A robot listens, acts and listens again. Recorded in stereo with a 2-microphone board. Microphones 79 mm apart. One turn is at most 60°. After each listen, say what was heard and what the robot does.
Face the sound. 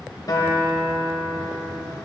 The guitar: about 55° left or 125° left. Turn 55° left.
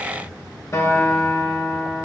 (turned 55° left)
So it is at 50° left. Turn 50° left.
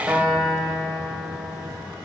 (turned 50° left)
The guitar is now 15° right. Turn 15° right.
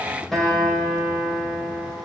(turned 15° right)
Facing the guitar.